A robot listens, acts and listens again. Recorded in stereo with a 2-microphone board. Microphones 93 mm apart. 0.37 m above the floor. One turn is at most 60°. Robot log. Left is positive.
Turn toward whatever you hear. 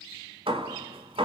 cmd yaw -60
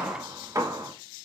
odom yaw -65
note: So it is at 35° right.
cmd yaw -35
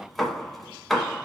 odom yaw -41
end: Facing the hammering.